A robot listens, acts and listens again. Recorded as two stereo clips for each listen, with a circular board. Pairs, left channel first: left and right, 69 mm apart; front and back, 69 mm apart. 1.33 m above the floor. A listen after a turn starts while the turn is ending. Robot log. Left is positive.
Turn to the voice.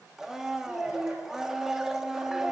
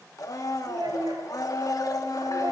note: The child speaking: 165° right.
cmd yaw -165
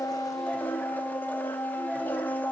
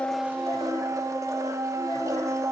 cmd idle
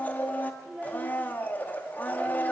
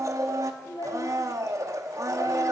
end: Found it: a child speaking, straight ahead, 2 to 4 m away.